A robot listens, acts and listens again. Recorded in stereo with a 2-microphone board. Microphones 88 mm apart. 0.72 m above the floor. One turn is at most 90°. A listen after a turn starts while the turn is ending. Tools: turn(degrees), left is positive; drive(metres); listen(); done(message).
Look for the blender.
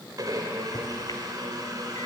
turn(degrees=-45)
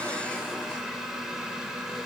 done("Facing the blender, 2 to 4 m away.")